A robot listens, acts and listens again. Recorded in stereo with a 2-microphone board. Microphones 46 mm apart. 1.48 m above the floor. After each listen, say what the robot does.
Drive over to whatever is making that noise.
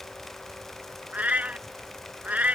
Turn 30° right.
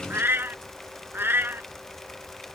Turn 110° right.
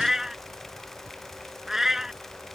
Turn 10° right.
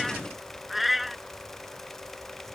Drive 1.0 m forward.
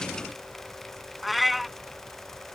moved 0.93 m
Drive 1.0 m forward.
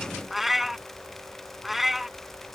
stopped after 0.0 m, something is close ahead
Arrived at the cat meowing, straight ahead.